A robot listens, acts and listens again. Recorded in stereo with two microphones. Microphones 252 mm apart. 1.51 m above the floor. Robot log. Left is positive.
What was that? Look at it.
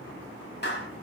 note: The clap: about 45° left or 135° left.
cmd yaw +45
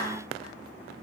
note: So it is at 90° left.
cmd yaw +90
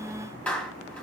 end: Facing the clap.